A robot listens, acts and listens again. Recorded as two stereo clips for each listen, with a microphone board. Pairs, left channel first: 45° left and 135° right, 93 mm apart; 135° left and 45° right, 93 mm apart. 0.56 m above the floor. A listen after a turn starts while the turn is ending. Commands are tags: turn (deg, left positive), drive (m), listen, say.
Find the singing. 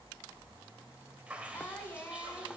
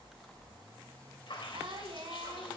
<turn deg="-20"/>
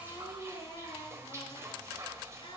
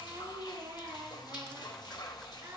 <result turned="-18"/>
<turn deg="15"/>
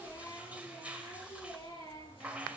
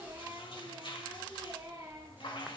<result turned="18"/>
<say>Facing the singing.</say>